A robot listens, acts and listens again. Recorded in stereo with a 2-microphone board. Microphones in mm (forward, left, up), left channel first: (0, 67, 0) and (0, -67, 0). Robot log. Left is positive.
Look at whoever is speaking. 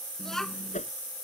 cmd yaw +30
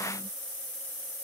cmd idle
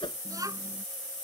note: So it is at 25° right.
cmd yaw -25
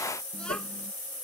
cmd idle
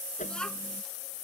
end: Found it: a child speaking, straight ahead.